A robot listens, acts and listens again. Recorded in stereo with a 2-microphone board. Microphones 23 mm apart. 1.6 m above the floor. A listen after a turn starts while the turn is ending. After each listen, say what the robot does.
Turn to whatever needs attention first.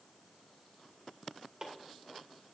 Keep listening.
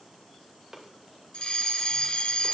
Turn 50° left.
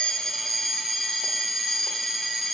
Facing the fire alarm, 1 to 2 m away.